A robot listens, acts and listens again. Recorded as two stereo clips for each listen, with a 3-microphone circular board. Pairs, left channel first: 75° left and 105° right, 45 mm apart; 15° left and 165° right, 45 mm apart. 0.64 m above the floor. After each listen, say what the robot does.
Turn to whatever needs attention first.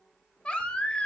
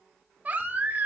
Turn 140° left.
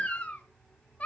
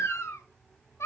Turn 15° left.
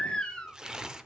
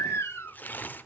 Found it: a baby crying, straight ahead.